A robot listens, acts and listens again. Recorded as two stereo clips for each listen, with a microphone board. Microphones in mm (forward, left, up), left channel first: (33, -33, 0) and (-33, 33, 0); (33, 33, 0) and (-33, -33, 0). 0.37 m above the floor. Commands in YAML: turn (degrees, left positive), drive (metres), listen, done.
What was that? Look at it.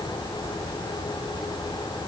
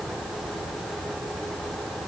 listen: true
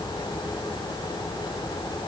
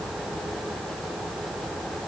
listen: true
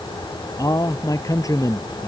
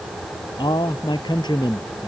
done: "Facing the man speaking."